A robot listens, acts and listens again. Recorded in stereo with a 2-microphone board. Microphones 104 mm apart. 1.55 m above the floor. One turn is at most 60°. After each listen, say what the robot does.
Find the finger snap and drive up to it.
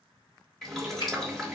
Turn 60° left.
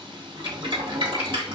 Keep listening.
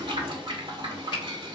Turn 60° left.
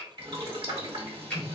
Drive 1.0 m forward.
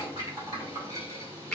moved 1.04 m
Turn 10° left.
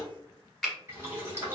Drive 1.0 m forward.
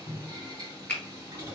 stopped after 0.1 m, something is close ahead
Turn 10° left.
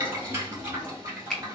Arrived at the finger snap, straight ahead.